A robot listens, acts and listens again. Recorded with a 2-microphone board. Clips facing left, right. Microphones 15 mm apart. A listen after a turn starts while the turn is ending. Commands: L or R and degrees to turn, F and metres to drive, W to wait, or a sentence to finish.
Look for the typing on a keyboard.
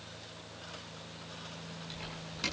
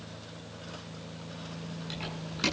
R20
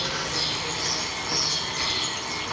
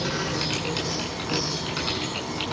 R140
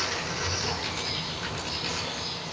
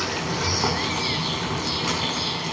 W
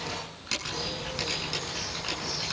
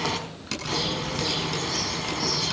Found it: typing on a keyboard, straight ahead, over 4 m away.